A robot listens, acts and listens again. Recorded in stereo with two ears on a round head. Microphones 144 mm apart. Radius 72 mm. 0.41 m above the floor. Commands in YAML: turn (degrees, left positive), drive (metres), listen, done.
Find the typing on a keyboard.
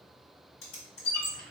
turn: 65
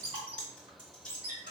done: "Facing the typing on a keyboard, 1 to 2 m away."